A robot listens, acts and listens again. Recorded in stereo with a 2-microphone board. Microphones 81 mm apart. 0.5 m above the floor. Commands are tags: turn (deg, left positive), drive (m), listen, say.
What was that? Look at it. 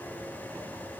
<listen/>
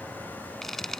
<turn deg="30"/>
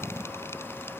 <listen/>
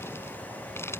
<turn deg="150"/>
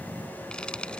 <turn deg="10"/>
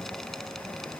<listen/>
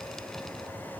<listen/>
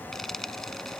<say>Facing the frying.</say>